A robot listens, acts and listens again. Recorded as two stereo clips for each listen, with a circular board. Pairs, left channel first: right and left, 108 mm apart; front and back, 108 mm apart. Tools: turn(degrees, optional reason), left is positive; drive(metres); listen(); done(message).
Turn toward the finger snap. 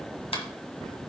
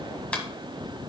turn(degrees=-80, reason="The finger snap: 80° right.")
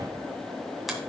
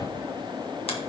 listen()
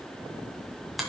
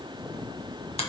listen()
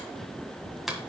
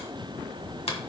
done("Found it: a finger snap, straight ahead, 1 to 2 m away.")